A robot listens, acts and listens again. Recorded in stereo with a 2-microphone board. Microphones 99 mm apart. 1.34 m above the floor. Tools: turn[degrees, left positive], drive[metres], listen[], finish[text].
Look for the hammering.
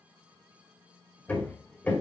Thought: The hammering: about 15° left or 165° left.
Action: turn[15]
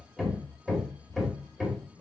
Action: finish[Found it: hammering, straight ahead.]